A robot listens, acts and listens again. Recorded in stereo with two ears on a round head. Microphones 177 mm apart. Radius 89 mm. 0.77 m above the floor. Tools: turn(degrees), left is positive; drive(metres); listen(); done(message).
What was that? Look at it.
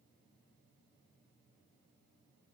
listen()
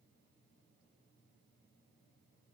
listen()
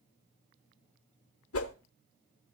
turn(degrees=90)
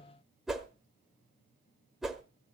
done("Found it: a whoosh, straight ahead, 1 to 2 m away.")